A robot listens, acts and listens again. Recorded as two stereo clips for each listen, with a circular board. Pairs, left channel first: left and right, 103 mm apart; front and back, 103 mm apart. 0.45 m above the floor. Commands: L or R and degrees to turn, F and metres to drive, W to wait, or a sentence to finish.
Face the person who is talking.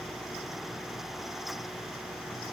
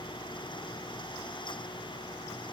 W
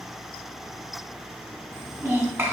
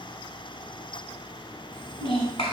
R25
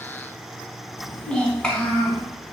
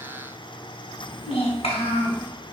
L10
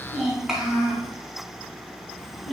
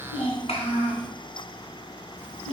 Found it: a child speaking, straight ahead.